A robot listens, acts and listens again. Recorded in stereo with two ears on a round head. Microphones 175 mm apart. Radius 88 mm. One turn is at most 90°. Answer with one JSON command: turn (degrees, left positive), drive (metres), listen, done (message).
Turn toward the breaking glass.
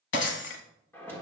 {"turn": 65}
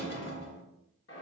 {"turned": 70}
{"listen": true}
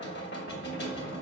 {"done": "I heard breaking glass, but can't make it out now. It was about 5° right or 45° left."}